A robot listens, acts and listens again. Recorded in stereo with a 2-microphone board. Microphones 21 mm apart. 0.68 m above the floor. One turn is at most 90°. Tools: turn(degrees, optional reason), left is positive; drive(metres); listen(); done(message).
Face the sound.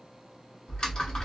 turn(degrees=40, reason="The typing on a keyboard: about 40° left or 140° left.")
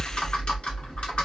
turn(degrees=90, reason="So it is at 90° left.")
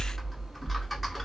done("Found it: typing on a keyboard, straight ahead, under 1 m away.")